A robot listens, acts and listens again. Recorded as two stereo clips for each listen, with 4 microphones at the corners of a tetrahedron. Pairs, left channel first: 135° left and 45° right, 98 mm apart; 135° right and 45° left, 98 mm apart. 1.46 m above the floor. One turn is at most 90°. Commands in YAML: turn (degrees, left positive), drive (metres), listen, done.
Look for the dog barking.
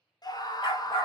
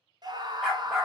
turn: 90
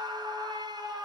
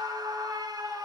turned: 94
turn: 45
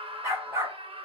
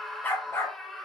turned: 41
turn: -90
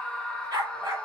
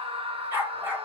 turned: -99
turn: -20
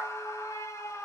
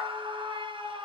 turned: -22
listen: true
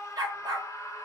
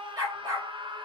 done: "Found it: a dog barking, straight ahead."